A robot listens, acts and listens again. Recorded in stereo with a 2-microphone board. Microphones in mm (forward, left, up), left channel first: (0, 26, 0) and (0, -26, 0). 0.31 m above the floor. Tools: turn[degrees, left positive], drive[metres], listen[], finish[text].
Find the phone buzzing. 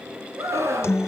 Action: listen[]
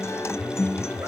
Action: turn[30]
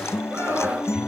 Action: listen[]
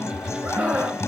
Thought: So it is at 30° right.
Action: turn[-30]
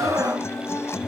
Action: listen[]
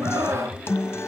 Thought: The phone buzzing is now 10° left.
Action: turn[10]
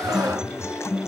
Action: finish[Found it: a phone buzzing, straight ahead, 1 to 2 m away.]